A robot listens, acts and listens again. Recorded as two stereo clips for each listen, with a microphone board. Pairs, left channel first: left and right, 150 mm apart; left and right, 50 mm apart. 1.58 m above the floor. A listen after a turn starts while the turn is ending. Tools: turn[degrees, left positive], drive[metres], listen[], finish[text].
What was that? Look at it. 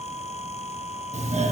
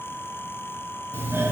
Thought: The doorbell: about 50° right or 130° right.
Action: turn[-50]
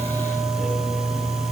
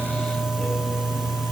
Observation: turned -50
Action: finish[Facing the doorbell.]